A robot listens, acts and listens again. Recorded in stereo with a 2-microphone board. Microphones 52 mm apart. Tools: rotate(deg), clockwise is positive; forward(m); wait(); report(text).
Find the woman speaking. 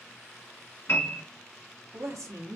rotate(70)
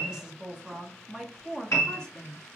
rotate(-15)
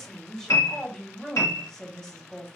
rotate(-10)
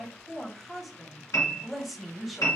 report("Facing the woman speaking, 1 to 2 m away.")